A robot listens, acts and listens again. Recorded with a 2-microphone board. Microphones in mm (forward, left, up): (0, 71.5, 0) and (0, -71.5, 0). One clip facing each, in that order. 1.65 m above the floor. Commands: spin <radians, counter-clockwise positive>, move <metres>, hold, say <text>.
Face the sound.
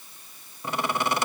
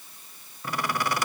spin 0.44
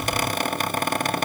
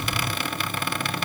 spin 2.27
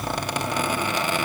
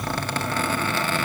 spin 0.26
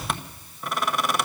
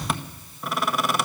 say Facing the squeak, 1 to 2 m away.